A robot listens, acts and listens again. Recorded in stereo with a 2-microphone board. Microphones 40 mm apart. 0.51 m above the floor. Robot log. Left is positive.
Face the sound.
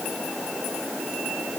cmd idle
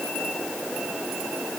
cmd idle
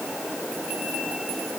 end: I can't make out anything to turn to.